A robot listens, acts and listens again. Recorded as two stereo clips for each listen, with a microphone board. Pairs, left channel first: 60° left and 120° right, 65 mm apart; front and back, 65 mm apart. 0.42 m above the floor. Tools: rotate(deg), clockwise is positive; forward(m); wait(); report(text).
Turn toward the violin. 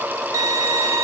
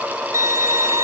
rotate(145)
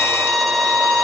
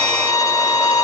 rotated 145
rotate(30)
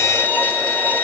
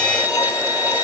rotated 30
report("Found it: a violin, straight ahead, 1 to 2 m away.")